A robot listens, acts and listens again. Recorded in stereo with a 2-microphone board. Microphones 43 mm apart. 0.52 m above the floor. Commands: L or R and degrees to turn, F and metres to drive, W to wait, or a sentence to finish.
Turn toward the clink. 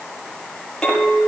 L30
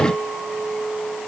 R15
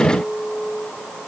Facing the clink.